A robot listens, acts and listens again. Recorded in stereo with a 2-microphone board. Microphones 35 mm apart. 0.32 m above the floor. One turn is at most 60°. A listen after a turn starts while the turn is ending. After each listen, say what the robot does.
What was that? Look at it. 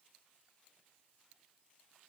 Keep listening.
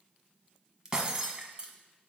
Turn 20° right.
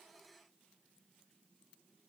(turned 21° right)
Keep listening.
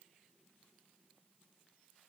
I heard breaking glass, but can't make it out now. It was about 5° left or 140° right.